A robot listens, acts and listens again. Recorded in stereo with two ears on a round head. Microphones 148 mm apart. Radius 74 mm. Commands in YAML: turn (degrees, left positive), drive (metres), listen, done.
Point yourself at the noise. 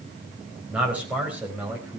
turn: -30
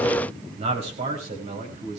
turn: -135
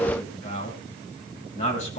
turn: 45
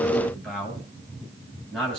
done: "Found it: a man speaking, straight ahead, over 4 m away."